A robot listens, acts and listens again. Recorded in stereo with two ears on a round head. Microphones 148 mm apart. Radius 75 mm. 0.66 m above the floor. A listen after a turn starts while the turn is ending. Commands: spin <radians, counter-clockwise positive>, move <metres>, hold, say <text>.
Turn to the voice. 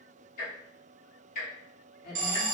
spin 1.05
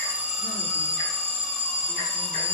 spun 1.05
hold
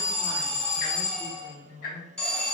spin 0.44
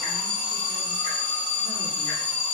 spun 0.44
hold
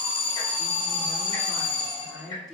say Found it: a woman speaking, straight ahead, 1 to 2 m away.